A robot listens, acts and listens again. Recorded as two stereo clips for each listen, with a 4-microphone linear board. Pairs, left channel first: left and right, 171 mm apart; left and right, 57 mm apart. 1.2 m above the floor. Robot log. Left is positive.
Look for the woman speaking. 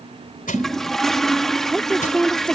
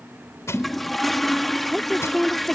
cmd yaw +30
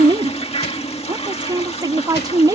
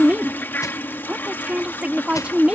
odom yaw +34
note: So it is at 20° right.
cmd yaw -20
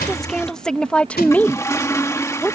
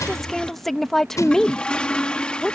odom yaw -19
note: The woman speaking is now 10° left.
cmd yaw +10
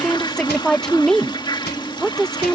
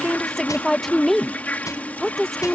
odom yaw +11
end: Found it: a woman speaking, straight ahead.